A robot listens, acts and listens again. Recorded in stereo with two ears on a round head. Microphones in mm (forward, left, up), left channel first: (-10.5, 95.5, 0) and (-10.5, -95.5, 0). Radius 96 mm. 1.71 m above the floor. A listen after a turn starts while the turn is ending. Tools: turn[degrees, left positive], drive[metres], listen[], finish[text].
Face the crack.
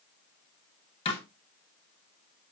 Action: listen[]
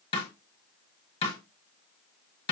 Action: listen[]
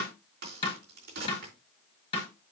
Thought: The crack: about 50° right or 130° right.
Action: turn[-50]
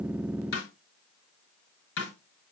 Action: listen[]
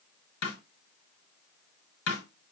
Action: finish[I heard a crack, but can't make it out now. It was about straight ahead or 80° right.]